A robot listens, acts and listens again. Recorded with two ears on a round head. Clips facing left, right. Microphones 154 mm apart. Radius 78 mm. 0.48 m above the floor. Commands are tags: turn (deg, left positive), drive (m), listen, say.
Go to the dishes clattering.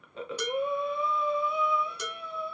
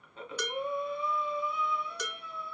<turn deg="30"/>
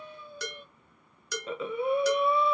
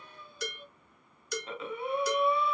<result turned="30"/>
<turn deg="120"/>
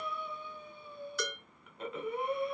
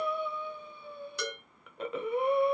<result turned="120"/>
<turn deg="-20"/>
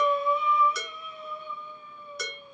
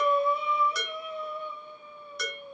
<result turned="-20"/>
<drive m="1.0"/>
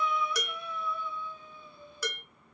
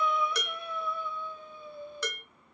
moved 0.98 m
<turn deg="10"/>
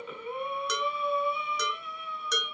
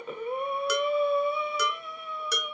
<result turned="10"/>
<drive m="1.0"/>
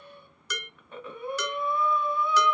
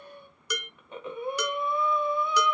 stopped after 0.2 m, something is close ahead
<turn deg="-10"/>
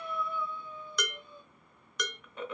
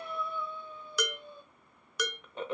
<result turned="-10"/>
<say>Arrived at the dishes clattering, straight ahead.</say>